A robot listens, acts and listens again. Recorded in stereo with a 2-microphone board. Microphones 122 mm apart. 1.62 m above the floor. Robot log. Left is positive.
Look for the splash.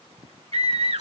cmd idle
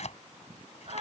cmd idle
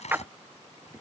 note: The splash: about 15° right or 165° right.
cmd yaw -15
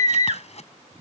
cmd idle
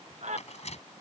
end: I heard a splash, but can't make it out now. It was about straight ahead or 150° right.